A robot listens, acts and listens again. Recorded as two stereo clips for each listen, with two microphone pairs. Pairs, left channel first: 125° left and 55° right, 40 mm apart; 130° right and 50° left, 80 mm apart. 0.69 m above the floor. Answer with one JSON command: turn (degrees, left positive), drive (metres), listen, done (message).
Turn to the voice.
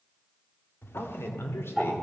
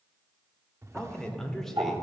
{"turn": 135}
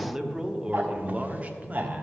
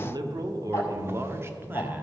{"turn": -20}
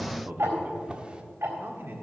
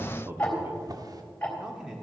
{"turn": -35}
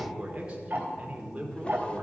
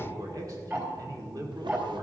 {"done": "Found it: a man speaking, straight ahead."}